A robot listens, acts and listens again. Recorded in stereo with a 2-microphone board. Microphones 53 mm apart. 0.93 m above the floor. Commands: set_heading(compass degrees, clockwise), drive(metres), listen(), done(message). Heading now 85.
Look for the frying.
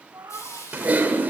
set_heading(15)
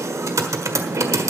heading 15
listen()
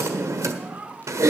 listen()
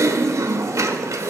done("I heard frying, but can't make it out now. It was about straight ahead or 40° left.")